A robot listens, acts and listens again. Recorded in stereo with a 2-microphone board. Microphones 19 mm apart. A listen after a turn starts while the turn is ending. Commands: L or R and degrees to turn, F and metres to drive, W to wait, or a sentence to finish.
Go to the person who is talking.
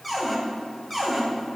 W
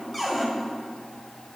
W
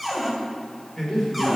L45
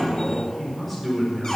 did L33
L10
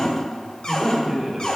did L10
F1.0
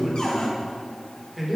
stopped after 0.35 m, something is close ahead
Blocked. The man speaking is further on, straight ahead.